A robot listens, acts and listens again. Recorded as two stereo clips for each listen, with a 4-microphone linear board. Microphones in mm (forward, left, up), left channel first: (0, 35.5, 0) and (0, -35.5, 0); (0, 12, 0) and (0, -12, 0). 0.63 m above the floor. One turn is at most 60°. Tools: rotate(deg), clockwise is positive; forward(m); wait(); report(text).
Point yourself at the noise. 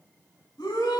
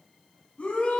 rotate(-60)
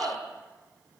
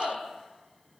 rotate(-15)
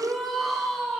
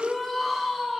report("Found it: a shout, straight ahead, over 4 m away.")